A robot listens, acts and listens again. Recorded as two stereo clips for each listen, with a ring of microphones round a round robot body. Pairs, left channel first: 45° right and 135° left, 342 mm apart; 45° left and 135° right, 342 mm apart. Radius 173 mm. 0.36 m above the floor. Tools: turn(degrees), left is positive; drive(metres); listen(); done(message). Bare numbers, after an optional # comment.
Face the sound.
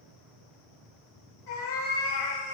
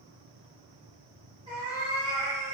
# The cat meowing: 60° right.
turn(-60)
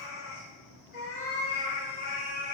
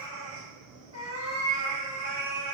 done("Facing the cat meowing, 1 to 2 m away.")